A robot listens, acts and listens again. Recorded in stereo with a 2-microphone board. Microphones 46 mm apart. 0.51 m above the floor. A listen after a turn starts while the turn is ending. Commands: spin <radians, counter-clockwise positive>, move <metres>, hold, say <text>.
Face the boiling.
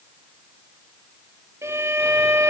hold
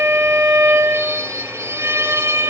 hold
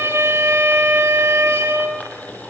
spin 0.61
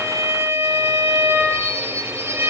hold
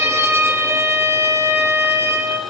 hold
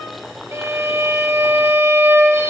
say Found it: boiling, straight ahead, over 4 m away.